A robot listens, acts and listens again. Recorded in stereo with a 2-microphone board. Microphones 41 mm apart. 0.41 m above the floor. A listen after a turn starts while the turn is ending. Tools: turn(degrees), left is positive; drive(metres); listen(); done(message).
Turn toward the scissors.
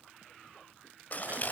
turn(degrees=40)
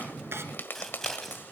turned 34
turn(degrees=10)
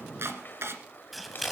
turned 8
done("Found it: scissors, straight ahead, 2 to 4 m away.")